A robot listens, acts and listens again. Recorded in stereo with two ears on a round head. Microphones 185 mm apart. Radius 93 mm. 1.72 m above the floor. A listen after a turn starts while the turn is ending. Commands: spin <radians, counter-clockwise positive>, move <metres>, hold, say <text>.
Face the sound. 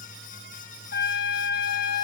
spin 0.87
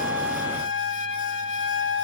spin 1.22
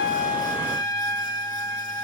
spin 0.26
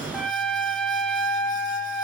say Found it: a trumpet, straight ahead.